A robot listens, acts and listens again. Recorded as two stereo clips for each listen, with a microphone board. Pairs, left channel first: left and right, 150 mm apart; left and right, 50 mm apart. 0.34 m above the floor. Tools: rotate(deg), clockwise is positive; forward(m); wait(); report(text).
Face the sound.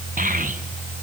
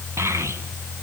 rotate(70)
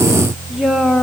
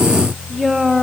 report("Facing the child speaking.")